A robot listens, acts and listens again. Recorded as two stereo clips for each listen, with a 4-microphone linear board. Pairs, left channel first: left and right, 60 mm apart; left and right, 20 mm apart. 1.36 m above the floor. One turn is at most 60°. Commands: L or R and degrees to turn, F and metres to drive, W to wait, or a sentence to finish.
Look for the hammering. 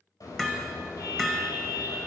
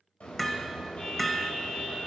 L30
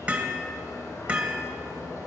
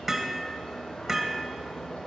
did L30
R25
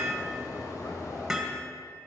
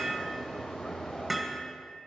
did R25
Facing the hammering.